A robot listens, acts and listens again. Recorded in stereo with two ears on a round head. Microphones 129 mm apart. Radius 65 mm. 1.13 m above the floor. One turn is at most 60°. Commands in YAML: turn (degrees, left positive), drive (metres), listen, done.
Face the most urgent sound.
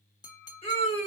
turn: 40
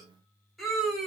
done: "Facing the scream."